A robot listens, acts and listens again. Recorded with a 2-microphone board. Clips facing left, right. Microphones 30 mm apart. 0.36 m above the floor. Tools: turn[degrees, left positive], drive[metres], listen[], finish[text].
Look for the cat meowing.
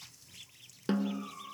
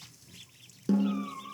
Thought: The cat meowing: about 40° right or 140° right.
Action: turn[-40]
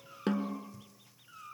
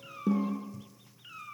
Thought: So it is at 95° right.
Action: turn[-95]
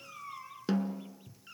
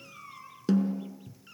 Action: finish[Facing the cat meowing, 2 to 4 m away.]